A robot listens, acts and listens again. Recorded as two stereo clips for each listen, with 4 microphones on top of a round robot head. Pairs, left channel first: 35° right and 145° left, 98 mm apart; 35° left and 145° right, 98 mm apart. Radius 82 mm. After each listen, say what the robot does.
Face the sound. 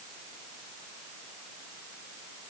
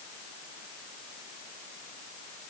Keep listening.
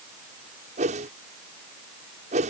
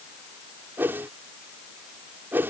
Turn 145° left.
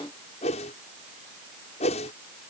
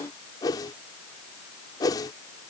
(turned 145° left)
Turn 15° right.
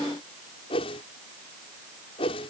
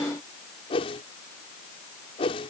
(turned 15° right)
Found it: a whoosh, straight ahead.